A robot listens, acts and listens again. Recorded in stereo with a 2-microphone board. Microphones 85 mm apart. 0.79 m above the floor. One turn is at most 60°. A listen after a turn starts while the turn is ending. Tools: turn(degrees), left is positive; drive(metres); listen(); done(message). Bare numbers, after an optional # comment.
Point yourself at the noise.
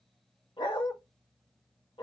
turn(60)
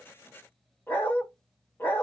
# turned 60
# So it is at 25° left.
turn(25)
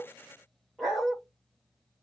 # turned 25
done("Found it: a dog barking, straight ahead, 1 to 2 m away.")